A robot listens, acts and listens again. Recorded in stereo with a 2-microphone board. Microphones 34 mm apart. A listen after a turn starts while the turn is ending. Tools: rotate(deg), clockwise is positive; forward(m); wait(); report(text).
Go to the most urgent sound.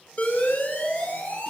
rotate(-60)
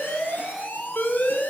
rotate(-60)
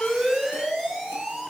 rotate(10)
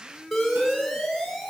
forward(1.0)
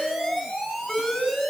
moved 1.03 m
forward(1.0)
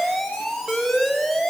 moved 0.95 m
forward(1.0)
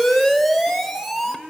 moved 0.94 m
forward(1.0)
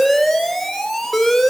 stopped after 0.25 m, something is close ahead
rotate(-10)
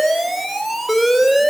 report("Arrived at the alarm, straight ahead.")